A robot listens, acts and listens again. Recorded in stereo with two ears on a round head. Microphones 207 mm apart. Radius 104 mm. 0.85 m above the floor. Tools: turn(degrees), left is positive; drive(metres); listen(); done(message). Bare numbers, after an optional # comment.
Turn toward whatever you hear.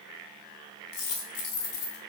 # The dropped coin: about 65° left or 115° left.
turn(65)
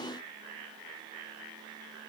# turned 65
listen()
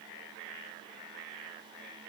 done("I heard a dropped coin, but can't make it out now. It was about straight ahead or 50° left.")